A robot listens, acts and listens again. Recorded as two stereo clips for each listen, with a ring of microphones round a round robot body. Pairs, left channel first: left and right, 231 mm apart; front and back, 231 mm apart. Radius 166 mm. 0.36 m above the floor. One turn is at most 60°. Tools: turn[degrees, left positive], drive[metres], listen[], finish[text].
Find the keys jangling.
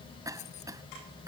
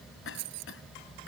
Thought: The keys jangling: 160° left.
Action: turn[60]
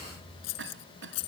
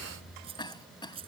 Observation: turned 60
Thought: The keys jangling is now 105° left.
Action: turn[60]
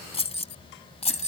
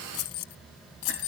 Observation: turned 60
Thought: The keys jangling is now 30° left.
Action: turn[30]
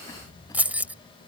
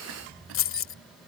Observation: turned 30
Action: finish[Found it: keys jangling, straight ahead.]